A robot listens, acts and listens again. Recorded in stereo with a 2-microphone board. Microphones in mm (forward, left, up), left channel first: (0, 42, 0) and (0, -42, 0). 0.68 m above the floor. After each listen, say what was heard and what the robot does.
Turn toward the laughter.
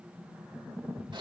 Keep listening.
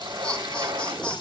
Turn 30° left.
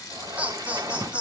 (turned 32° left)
So it is at 15° right. Turn 15° right.
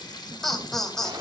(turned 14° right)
Facing the laughter.